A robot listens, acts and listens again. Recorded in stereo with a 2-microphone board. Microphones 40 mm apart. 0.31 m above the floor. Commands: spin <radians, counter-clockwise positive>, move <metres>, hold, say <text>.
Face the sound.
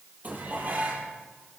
spin -0.70
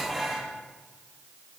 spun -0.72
say Facing the dishes clattering.